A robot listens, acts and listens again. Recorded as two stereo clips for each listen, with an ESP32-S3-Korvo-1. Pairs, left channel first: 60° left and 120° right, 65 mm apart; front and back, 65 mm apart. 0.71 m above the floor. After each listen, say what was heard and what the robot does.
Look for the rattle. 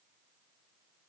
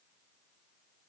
Keep listening.
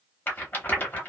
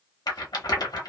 Found it: a rattle, straight ahead.